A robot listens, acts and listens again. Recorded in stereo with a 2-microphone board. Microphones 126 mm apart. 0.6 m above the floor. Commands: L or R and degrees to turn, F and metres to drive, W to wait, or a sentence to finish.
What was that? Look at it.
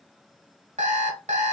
R70
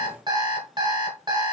R35
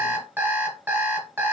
R15
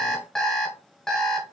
Facing the alarm clock.